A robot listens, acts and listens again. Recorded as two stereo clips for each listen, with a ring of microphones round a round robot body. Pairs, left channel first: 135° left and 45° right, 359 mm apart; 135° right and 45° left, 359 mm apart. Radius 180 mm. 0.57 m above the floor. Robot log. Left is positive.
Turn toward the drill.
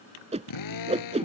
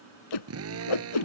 note: The drill: 95° left.
cmd yaw +95
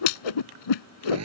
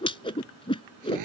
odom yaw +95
end: Found it: a drill, straight ahead.